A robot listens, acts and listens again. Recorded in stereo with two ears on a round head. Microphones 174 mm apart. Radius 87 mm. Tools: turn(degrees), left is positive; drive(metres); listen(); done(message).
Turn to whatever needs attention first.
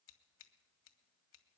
listen()
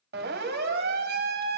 turn(degrees=-60)
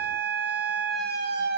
turn(degrees=-60)
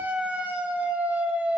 done("Found it: a siren, straight ahead, 2 to 4 m away.")